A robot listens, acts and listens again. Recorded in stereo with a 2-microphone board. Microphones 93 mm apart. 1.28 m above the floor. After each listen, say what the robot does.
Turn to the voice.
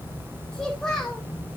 Turn 30° left.
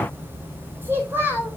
Turn 25° right.
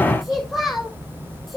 Found it: a child speaking, straight ahead, over 4 m away.